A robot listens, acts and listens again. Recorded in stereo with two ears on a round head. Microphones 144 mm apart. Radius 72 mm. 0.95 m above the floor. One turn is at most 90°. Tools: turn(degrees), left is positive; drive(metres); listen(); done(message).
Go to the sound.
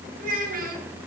turn(degrees=-60)
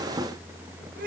listen()
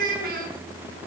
turn(degrees=-60)
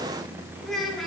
drive(metres=1.0)
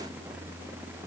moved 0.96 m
listen()
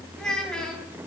drive(metres=1.0)
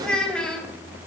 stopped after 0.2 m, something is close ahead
done("Blocked. The child speaking is further on, straight ahead.")